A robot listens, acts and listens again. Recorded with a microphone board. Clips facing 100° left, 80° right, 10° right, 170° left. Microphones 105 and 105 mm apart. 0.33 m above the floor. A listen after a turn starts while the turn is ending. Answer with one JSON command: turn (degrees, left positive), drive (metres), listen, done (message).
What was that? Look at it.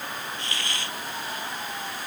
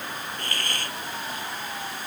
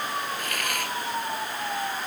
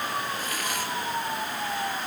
{"turn": -40}
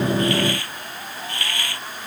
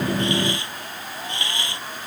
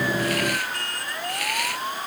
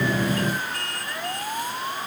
{"turn": -10}
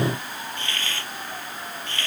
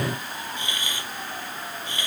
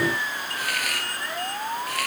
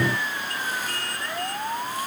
{"done": "Found it: a hiss, straight ahead."}